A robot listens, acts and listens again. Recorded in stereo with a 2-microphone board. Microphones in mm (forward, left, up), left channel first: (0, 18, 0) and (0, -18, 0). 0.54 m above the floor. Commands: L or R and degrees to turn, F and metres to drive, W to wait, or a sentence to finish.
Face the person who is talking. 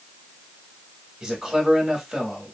R15
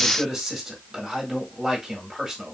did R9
R30
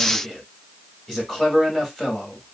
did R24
L15
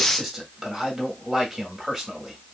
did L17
Found it: a man speaking, straight ahead.